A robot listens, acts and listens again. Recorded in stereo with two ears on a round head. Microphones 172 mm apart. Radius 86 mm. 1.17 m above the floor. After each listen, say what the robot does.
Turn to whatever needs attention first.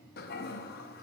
Keep listening.
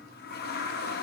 Keep listening.
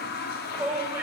Turn 30° right.
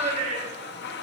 Turn 140° right.
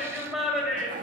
Facing the shout.